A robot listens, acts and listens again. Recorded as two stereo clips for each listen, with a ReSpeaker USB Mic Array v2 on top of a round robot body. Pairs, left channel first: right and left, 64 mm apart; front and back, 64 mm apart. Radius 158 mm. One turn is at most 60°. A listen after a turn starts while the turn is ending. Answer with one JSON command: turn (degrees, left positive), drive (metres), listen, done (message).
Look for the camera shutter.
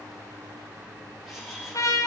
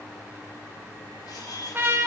{"done": "Found it: a camera shutter, straight ahead, 2 to 4 m away."}